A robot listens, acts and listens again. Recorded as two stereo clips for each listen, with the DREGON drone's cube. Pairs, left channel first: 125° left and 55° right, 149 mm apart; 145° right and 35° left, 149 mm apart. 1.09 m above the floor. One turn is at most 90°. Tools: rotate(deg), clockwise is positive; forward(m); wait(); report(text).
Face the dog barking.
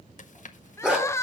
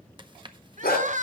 rotate(90)
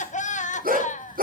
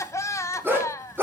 rotate(40)
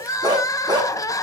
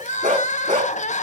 report("Found it: a dog barking, straight ahead, over 4 m away.")